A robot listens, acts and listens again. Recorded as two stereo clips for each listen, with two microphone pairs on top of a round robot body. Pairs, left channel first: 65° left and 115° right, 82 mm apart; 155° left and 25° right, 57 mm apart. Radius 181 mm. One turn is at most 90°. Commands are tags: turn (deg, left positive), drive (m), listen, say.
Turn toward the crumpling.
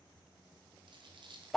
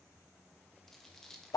<turn deg="-90"/>
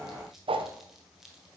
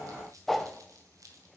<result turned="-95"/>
<turn deg="-30"/>
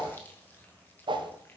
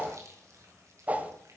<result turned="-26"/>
<say>Facing the crumpling, 1 to 2 m away.</say>